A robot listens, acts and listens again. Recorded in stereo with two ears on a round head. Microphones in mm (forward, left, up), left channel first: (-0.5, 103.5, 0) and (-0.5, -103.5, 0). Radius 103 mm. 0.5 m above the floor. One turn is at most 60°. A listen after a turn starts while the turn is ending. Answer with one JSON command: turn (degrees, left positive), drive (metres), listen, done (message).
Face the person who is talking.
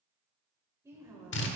{"turn": -30}
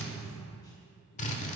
{"listen": true}
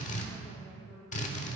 {"turn": 20}
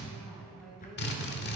{"done": "Found it: a woman speaking, straight ahead."}